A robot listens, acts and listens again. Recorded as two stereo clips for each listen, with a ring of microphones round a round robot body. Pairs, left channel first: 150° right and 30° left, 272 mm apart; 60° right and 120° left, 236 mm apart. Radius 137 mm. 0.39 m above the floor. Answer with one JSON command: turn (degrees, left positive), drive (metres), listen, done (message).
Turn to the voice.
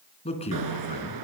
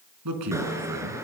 {"turn": 140}
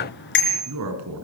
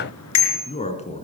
{"done": "Found it: a man speaking, straight ahead, over 4 m away."}